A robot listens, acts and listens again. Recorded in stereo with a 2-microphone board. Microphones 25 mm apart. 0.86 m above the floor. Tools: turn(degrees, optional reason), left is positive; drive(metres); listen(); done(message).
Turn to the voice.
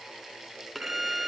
listen()
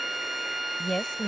turn(degrees=30, reason="The woman speaking: about 30° left or 150° left.")
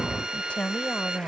turn(degrees=125, reason="So it is at 125° left.")
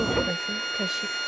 listen()
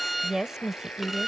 turn(degrees=-20, reason="The woman speaking is now 20° right.")
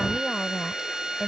listen()
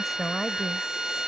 done("Facing the woman speaking.")